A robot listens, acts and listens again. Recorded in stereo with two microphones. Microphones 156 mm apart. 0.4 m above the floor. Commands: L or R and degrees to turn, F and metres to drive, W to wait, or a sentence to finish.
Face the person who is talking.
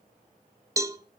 W
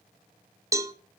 W
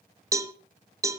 I can't make out anyone speaking to turn to.